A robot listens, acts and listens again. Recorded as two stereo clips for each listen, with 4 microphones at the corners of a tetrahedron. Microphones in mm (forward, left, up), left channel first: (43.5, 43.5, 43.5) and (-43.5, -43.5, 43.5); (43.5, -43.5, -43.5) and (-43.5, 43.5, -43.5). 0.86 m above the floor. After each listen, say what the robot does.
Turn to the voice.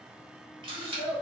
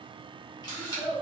Turn 135° right.
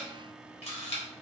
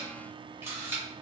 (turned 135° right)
Keep listening.
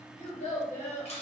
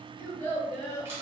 Turn 25° left.
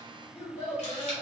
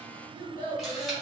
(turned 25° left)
Found it: a child speaking, straight ahead, 1 to 2 m away.